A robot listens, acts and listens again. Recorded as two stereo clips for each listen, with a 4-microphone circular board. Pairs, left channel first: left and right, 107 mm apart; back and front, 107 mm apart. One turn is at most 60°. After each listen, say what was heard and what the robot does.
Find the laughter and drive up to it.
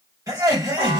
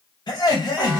The laughter: 140° right. Turn 60° right.
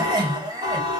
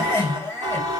The laughter is now 115° right. Turn 60° right.
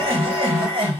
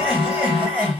The laughter is now 70° right. Turn 60° right.
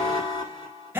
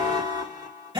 The laughter is now 20° right. Turn 20° right.
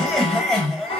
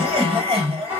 Drive 1.0 m forward.
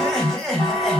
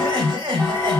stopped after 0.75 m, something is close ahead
I am next to the laughter.